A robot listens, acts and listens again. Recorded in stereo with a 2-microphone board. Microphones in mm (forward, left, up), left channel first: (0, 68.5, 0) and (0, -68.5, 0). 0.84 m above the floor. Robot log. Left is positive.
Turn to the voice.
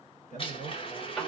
note: The man speaking: about 70° left or 110° left.
cmd yaw +70
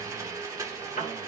cmd idle
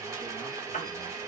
cmd idle
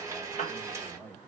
note: So it is at 15° left.
cmd yaw +15
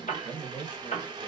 end: Facing the man speaking.